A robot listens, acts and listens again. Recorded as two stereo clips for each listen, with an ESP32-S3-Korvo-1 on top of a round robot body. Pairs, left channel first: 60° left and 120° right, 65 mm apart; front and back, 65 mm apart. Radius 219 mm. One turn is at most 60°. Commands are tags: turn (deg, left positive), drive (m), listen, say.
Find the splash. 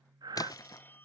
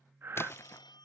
<turn deg="50"/>
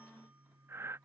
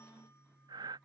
<say>Facing where the splash came from. I can't hear it now.</say>